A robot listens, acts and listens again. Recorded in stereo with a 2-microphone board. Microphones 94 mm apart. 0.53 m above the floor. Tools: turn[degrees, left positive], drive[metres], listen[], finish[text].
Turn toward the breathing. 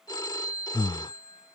Thought: The breathing: about 70° left or 110° left.
Action: turn[70]
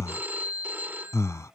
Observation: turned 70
Thought: So it is at 35° left.
Action: turn[35]
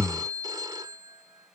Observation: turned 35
Action: finish[Facing the breathing.]